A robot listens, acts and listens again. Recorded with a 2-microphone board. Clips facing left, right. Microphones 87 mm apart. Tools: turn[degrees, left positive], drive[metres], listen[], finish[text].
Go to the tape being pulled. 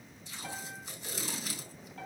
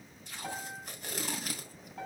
Thought: The tape being pulled: about 55° right or 125° right.
Action: turn[-55]
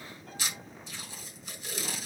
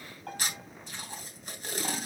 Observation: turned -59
Thought: So it is at 55° right.
Action: turn[-55]
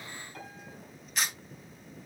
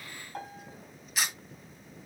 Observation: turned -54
Action: drive[1.0]
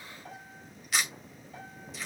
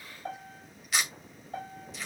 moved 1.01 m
Action: drive[1.0]
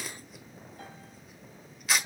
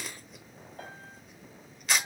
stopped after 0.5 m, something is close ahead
Action: finish[I am next to the tape being pulled.]